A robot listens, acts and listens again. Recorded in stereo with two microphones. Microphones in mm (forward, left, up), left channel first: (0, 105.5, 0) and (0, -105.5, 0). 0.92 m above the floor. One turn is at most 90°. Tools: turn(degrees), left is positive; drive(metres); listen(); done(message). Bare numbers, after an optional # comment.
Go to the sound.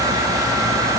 listen()
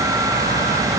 listen()
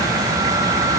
done("I can't make out anything.")